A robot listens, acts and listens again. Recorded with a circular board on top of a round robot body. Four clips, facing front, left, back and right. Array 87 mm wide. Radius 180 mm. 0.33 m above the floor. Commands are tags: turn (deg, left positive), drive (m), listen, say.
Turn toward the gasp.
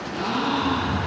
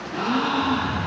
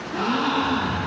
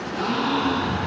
<turn deg="145"/>
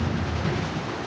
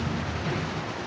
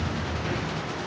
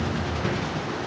<say>I heard a gasp from this way, but can't make it out now.</say>